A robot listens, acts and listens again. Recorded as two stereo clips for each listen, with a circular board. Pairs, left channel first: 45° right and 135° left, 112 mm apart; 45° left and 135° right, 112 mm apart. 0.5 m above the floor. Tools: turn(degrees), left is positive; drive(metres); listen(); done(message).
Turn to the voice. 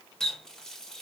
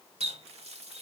listen()
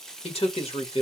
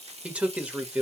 turn(degrees=-60)
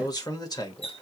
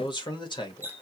done("Facing the man speaking, 1 to 2 m away.")